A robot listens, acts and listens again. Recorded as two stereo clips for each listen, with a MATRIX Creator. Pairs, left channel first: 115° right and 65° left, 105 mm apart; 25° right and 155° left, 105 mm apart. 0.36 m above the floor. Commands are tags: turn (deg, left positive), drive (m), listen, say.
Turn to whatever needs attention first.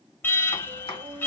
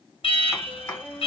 <turn deg="-45"/>
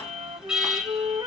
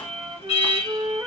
<turn deg="-15"/>
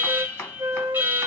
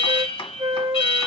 <say>Found it: an alarm, straight ahead.</say>